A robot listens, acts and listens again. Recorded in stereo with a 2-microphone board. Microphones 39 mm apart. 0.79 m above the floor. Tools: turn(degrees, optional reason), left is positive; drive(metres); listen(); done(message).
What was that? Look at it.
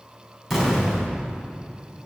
turn(degrees=30)
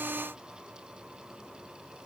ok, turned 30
listen()
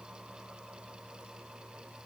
done("I heard an explosion, but can't make it out now. It was about 30° right or 150° left.")